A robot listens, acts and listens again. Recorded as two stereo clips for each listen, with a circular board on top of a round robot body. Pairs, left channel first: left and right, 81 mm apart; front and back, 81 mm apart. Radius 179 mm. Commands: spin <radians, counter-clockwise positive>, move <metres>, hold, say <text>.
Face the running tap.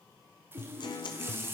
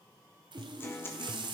spin -2.71
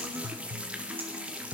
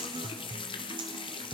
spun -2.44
spin -0.26
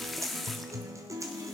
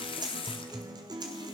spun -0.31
say Facing the running tap.